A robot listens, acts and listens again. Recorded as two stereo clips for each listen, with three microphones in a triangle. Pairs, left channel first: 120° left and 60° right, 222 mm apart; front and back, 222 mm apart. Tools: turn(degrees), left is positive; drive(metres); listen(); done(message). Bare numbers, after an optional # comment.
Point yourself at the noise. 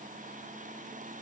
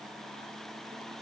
listen()
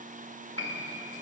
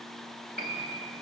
# The piano: 135° left.
turn(135)
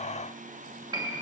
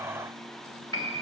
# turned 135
# The piano is now 10° left.
turn(10)
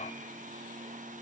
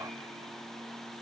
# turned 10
listen()
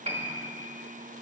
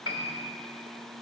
done("Found it: a piano, straight ahead.")